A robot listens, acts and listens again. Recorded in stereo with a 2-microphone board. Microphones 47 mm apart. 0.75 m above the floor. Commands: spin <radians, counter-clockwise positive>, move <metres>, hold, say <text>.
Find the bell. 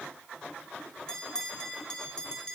spin 0.26
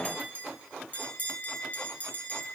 spin 2.62
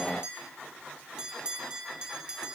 spin -0.35
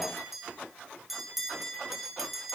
say Facing the bell, 1 to 2 m away.